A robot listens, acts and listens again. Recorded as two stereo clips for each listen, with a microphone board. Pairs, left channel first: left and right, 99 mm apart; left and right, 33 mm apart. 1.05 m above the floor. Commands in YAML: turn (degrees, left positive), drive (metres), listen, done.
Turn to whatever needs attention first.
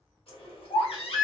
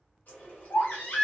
turn: 75
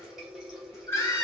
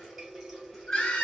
turn: 25
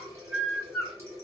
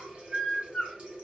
done: "Found it: a baby crying, straight ahead, 1 to 2 m away."